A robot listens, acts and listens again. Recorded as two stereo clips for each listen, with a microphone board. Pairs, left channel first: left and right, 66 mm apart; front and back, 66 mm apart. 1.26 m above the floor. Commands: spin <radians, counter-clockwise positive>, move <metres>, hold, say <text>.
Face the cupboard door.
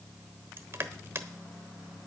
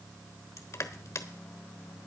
hold
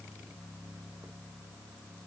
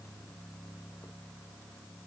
hold
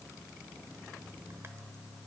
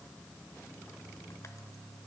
say I can't make out a cupboard door to turn to.